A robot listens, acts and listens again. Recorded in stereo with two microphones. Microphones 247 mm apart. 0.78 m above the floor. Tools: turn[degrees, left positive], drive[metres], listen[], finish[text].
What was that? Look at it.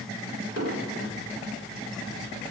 Thought: The explosion: about 70° right or 110° right.
Action: turn[-70]
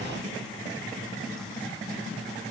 Action: listen[]
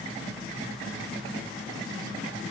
Action: finish[I heard an explosion, but can't make it out now. It was about straight ahead or 40° right.]